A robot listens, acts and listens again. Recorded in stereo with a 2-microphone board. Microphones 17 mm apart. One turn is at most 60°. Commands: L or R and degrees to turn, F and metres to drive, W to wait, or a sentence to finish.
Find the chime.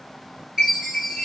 R35
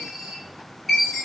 Found it: a chime, straight ahead, 1 to 2 m away.